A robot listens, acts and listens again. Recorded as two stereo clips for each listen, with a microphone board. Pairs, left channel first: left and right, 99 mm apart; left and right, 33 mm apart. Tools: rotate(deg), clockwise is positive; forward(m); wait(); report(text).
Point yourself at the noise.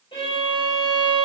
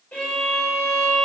rotate(-65)
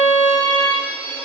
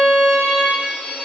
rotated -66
rotate(-30)
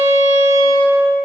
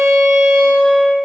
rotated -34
report("Facing the violin.")